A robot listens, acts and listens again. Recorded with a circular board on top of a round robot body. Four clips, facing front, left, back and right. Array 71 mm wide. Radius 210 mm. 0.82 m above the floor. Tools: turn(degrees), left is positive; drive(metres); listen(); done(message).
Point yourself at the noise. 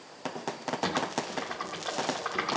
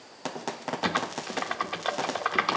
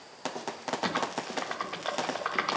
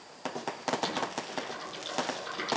turn(degrees=105)
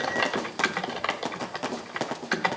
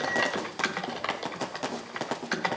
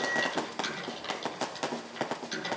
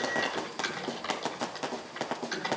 turn(degrees=25)
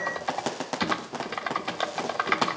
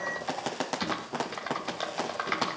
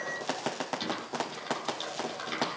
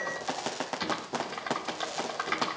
done("Found it: typing on a keyboard, straight ahead.")